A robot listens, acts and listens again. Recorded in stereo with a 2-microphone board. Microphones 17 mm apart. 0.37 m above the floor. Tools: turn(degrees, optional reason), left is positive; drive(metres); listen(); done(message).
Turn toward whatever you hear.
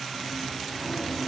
turn(degrees=30)
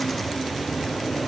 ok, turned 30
turn(degrees=135, reason="So it is at 135° left.")
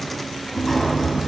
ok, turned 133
done("Facing the sliding door, 2 to 4 m away.")